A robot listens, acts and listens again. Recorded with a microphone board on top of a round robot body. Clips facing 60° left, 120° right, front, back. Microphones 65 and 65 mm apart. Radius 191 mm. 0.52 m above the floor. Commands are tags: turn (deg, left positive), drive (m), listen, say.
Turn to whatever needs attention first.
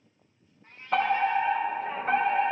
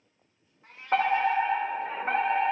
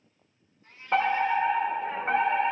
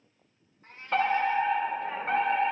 <turn deg="-70"/>
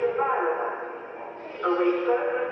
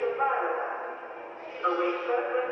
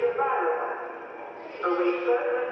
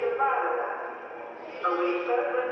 <turn deg="15"/>
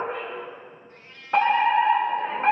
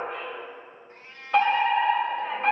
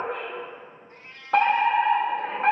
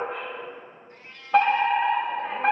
<say>Found it: a fire alarm, straight ahead.</say>